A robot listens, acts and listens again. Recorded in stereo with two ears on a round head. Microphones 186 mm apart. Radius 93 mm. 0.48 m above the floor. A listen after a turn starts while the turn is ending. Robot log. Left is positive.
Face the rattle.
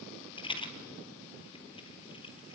note: The rattle: about 25° left or 155° left.
cmd yaw +25
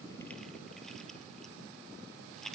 end: Facing the rattle, 1 to 2 m away.